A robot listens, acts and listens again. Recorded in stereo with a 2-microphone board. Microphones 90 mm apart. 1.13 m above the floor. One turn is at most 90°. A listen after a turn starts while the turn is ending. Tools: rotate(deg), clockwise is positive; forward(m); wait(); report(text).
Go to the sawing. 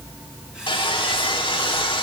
rotate(-70)
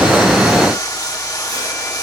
rotate(-40)
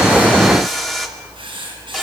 forward(1.0)
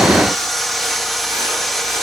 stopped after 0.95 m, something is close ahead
report("I am next to the sawing.")